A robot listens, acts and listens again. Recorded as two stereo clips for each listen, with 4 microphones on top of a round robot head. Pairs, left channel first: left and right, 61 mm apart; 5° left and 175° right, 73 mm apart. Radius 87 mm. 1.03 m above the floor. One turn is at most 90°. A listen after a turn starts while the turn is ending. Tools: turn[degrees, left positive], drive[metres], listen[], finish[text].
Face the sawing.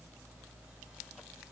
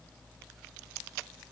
Action: listen[]
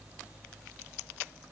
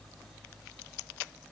Action: listen[]
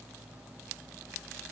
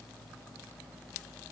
Action: finish[I can't make out sawing.]